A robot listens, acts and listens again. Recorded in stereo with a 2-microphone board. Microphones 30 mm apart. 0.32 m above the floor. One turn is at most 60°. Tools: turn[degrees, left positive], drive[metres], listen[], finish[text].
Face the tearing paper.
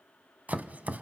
Action: listen[]
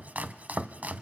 Action: listen[]
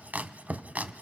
Action: finish[I can't make out tearing paper to turn to.]